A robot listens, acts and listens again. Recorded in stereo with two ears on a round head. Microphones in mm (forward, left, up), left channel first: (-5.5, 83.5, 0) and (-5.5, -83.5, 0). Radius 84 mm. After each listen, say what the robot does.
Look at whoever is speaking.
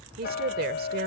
Turn 55° right.
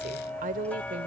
Turn 55° right.
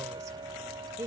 Turn 20° right.
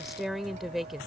Facing the woman speaking.